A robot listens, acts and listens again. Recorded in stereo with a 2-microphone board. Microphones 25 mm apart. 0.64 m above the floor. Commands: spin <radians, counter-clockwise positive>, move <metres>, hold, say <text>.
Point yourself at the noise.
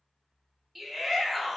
spin -0.52
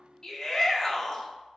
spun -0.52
spin 0.44
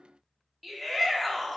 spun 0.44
say Facing the shout.